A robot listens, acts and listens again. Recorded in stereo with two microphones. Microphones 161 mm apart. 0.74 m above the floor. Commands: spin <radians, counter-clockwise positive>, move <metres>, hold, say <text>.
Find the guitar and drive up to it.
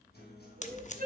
spin 1.57
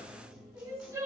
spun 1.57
move 1.0
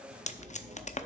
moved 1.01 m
move 1.0
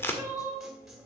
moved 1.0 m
move 1.0
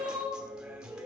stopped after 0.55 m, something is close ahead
say Arrived at the guitar, straight ahead.